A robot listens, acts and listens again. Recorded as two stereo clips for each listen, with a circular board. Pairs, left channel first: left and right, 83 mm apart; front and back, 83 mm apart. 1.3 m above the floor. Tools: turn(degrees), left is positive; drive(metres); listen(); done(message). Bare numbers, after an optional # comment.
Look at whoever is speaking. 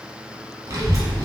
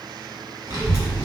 # The child speaking: 135° right.
turn(-135)
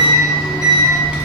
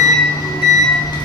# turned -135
# The child speaking is now 10° right.
turn(-10)
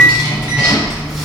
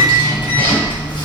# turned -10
done("Facing the child speaking.")